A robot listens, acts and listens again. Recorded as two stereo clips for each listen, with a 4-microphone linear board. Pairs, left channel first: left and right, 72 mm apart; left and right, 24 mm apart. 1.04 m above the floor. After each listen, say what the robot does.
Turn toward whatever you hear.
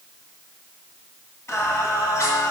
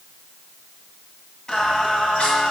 Turn 50° left.
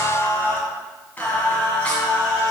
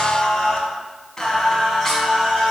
Turn 15° left.
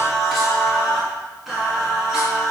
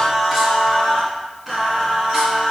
Facing the singing.